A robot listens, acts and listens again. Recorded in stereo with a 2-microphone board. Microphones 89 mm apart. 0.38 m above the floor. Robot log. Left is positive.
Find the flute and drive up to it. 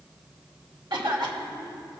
cmd idle
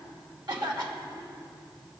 cmd idle
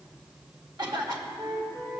note: The flute: about 50° right or 130° right.
cmd yaw -50
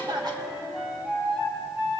note: So it is at 10° right.
cmd yaw -10
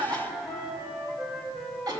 cmd fwd 1.0
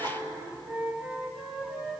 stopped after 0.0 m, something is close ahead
note: The flute is now 10° right.
cmd yaw -10
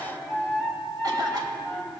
end: Blocked. The flute is further on, straight ahead.